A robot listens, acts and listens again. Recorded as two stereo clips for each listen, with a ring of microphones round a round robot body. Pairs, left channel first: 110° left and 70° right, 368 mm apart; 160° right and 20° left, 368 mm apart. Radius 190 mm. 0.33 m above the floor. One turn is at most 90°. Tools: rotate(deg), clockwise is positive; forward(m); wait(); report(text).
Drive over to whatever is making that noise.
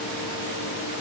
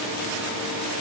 wait()
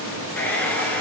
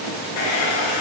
rotate(90)
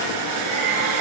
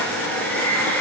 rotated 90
rotate(70)
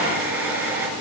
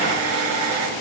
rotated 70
rotate(-20)
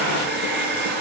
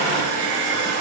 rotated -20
forward(1.0)
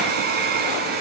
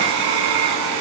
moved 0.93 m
forward(1.0)
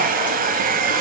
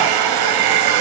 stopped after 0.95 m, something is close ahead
report("Arrived at the hair dryer, straight ahead.")